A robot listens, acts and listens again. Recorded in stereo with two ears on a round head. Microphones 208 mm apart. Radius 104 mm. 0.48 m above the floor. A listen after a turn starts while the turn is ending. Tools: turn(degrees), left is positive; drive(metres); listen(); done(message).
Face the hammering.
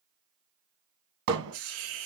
turn(degrees=-65)
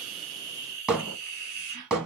done("Found it: hammering, straight ahead.")